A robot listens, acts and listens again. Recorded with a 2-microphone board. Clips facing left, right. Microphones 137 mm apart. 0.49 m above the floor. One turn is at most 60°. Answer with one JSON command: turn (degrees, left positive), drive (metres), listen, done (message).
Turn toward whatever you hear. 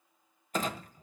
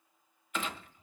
{"turn": 40}
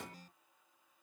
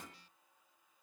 {"turn": 60}
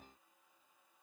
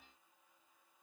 {"turn": 40}
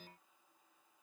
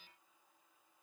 {"done": "Facing where the clunk came from. I can't hear it now."}